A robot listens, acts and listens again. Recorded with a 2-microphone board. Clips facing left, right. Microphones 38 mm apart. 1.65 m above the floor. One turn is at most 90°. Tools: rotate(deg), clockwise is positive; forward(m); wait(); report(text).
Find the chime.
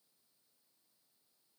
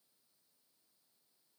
wait()
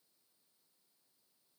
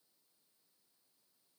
wait()
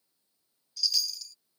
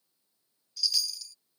rotate(-30)
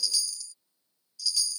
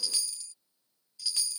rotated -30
rotate(35)
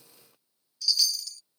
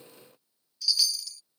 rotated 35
report("Facing the chime.")